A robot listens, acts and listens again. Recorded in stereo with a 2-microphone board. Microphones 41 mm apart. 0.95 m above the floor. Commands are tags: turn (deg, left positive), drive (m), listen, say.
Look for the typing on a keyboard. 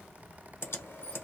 <turn deg="90"/>
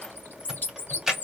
<say>Found it: typing on a keyboard, straight ahead, 1 to 2 m away.</say>